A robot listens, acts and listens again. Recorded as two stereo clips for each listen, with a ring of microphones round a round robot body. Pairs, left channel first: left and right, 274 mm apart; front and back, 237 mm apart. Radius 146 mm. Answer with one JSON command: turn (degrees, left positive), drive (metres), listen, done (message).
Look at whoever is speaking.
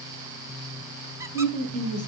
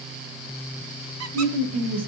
{"turn": 150}
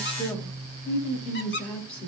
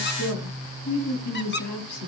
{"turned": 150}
{"done": "Facing the woman speaking, 2 to 4 m away."}